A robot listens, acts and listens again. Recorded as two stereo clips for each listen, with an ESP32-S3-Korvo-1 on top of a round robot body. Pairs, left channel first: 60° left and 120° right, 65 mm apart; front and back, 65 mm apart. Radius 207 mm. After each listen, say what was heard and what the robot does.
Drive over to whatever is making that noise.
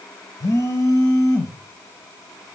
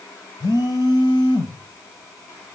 The phone buzzing: 15° left. Turn 15° left.
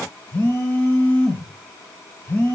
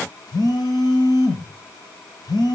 Drive 1.0 m forward.
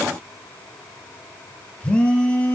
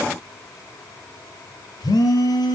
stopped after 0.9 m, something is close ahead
The phone buzzing is now 15° right. Turn 15° right.
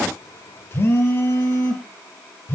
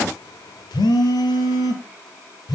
Arrived at the phone buzzing, straight ahead.